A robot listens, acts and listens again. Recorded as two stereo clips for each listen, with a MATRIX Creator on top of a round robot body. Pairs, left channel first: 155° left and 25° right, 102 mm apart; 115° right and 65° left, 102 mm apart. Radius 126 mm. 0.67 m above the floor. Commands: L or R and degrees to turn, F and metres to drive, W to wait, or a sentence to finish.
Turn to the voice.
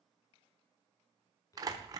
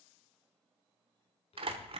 R145
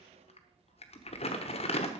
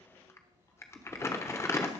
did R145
Facing the child speaking.